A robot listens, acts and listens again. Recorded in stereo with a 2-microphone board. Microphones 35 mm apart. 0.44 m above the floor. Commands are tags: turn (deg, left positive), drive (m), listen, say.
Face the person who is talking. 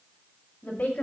<turn deg="50"/>
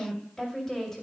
<turn deg="15"/>
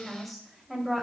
<say>Facing the woman speaking.</say>